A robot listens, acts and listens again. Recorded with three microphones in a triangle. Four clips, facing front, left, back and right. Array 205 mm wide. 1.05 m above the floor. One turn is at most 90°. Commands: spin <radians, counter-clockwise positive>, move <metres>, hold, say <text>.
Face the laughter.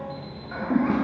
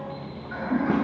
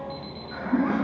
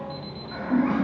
spin 0.17
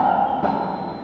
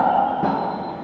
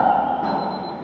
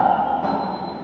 hold
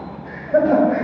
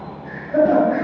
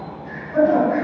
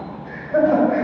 spin 0.17
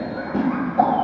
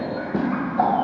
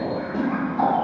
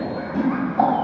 say Found it: laughter, straight ahead, over 4 m away.